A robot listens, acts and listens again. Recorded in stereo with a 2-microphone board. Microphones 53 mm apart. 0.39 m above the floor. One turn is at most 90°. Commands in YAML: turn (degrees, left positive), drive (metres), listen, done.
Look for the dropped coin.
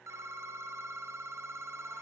listen: true
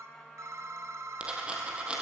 turn: -20
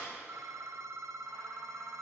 listen: true
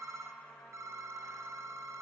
done: "I heard a dropped coin, but can't make it out now. It was about straight ahead or 140° right."